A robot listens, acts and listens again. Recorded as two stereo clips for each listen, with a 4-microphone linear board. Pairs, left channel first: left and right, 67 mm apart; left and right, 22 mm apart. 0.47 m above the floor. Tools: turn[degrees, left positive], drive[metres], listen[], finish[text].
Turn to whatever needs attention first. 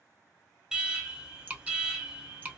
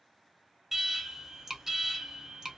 Action: turn[-30]
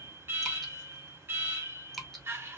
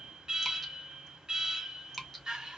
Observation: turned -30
Thought: So it is at 140° right.
Action: turn[-140]
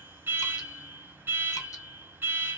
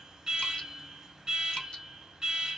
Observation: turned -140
Thought: The alarm is now 40° right.
Action: turn[-40]
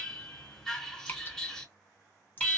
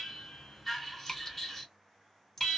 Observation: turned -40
Action: finish[Found it: an alarm, straight ahead.]